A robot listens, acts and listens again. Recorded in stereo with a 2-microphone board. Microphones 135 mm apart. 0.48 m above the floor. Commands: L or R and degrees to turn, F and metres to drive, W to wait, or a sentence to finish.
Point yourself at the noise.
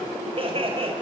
R40
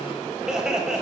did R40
Found it: laughter, straight ahead, 2 to 4 m away.